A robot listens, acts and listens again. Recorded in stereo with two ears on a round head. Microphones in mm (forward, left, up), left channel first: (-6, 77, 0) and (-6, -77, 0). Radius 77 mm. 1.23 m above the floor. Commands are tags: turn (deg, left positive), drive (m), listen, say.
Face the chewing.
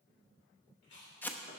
<turn deg="70"/>
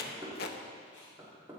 <listen/>
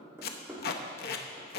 <listen/>
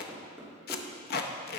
<say>I heard chewing, but can't make it out now. It was about straight ahead or 40° left.</say>